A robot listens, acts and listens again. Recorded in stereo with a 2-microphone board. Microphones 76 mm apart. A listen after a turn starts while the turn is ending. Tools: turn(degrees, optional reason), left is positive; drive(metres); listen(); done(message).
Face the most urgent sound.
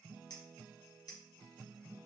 listen()
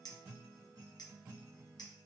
listen()
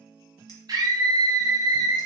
turn(degrees=-60, reason="The scream: about 60° right or 120° right.")
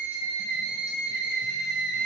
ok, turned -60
turn(degrees=-20, reason="So it is at 20° right.")
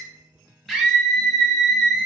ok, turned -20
done("Found it: a scream, straight ahead.")